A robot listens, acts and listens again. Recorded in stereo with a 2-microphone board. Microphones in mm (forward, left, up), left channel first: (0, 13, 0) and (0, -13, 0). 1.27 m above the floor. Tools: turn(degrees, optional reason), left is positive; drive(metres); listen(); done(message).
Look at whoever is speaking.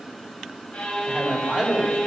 turn(degrees=-40, reason="The man speaking: about 40° right or 140° right.")
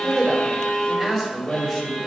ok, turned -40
turn(degrees=15, reason="So it is at 15° left.")
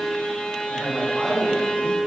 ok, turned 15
done("Found it: a man speaking, straight ahead, over 4 m away.")